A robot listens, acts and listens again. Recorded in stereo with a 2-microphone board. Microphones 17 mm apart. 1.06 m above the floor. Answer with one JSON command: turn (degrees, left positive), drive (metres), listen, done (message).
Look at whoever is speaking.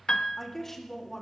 {"turn": 15}
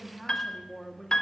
{"done": "Facing the woman speaking."}